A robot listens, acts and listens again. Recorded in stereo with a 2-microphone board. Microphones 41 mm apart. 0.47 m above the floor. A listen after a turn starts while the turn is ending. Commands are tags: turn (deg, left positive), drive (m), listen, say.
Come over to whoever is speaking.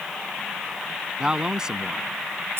<turn deg="-15"/>
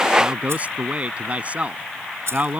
<turn deg="-150"/>
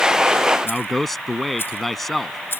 <drive m="1.0"/>
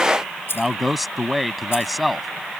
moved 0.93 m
<drive m="1.0"/>
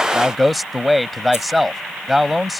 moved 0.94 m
<drive m="1.0"/>
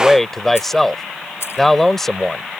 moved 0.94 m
<drive m="1.0"/>
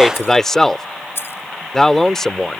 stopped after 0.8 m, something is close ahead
<turn deg="15"/>
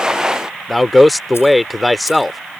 <say>Arrived at the man speaking, straight ahead.</say>